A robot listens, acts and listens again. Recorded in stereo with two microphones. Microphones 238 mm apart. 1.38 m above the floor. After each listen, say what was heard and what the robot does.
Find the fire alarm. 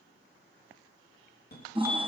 The fire alarm: about 45° left or 135° left. Turn 45° left.
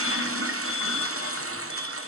Keep listening.
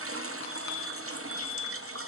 So it is at 90° left. Turn 90° left.
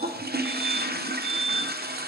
The fire alarm is now 20° left. Turn 20° left.
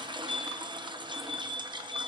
Facing the fire alarm, 2 to 4 m away.